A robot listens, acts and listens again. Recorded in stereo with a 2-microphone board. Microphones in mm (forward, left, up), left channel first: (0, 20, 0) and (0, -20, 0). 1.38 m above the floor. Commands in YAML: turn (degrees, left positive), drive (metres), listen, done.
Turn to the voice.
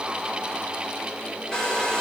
listen: true
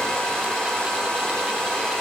listen: true
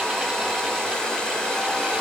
done: "I can't make out anyone speaking, only a hair dryer."